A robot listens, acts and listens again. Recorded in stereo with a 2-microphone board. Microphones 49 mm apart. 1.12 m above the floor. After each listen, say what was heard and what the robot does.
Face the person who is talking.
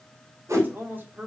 The man speaking: about 40° right or 140° right. Turn 40° right.
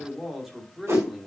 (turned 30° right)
So it is at 10° right. Turn 10° right.
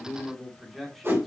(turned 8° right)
Found it: a man speaking, straight ahead.